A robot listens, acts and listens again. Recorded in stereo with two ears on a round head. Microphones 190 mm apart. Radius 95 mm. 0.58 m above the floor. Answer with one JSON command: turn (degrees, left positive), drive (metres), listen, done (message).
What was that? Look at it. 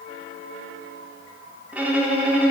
{"turn": -30}
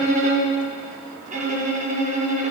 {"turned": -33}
{"turn": -140}
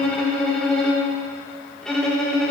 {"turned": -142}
{"done": "Facing the violin, under 1 m away."}